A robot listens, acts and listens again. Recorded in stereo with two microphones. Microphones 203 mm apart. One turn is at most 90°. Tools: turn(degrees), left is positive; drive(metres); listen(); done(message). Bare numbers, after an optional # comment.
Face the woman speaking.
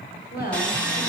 # The woman speaking: about 55° left or 125° left.
turn(55)
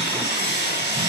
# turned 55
listen()
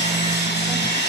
listen()
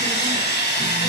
done("I heard a woman speaking, but can't make it out now. It was about straight ahead or 70° left.")